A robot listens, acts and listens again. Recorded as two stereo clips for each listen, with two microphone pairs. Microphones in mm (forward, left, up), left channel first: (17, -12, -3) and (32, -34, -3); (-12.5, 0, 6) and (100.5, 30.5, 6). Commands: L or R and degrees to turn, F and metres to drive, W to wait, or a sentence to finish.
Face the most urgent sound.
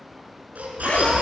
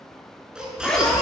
R65
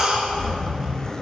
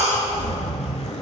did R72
Facing the baby crying.